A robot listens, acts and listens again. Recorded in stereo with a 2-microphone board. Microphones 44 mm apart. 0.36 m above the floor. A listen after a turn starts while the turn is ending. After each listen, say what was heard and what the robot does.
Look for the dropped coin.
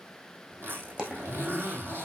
The dropped coin: about 25° right or 155° right. Turn 25° right.
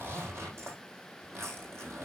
Keep listening.
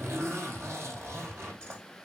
I heard a dropped coin, but can't make it out now. It was about straight ahead or 130° right.